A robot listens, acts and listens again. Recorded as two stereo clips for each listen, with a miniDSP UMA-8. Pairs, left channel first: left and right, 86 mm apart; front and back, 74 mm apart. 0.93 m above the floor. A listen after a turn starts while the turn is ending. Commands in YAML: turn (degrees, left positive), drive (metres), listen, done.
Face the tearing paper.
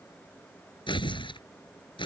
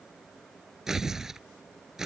turn: 95
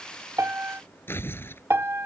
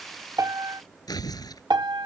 turn: 25
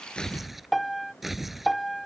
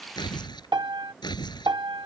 done: "Facing the tearing paper."